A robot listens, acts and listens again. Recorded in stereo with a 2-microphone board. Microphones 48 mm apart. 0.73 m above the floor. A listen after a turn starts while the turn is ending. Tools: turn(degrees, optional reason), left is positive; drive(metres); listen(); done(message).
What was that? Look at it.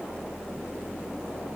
listen()
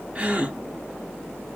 turn(degrees=-25, reason="The gasp: about 25° right or 155° right.")
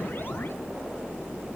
listen()
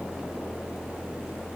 done("I heard a gasp, but can't make it out now. It was about straight ahead or 130° right.")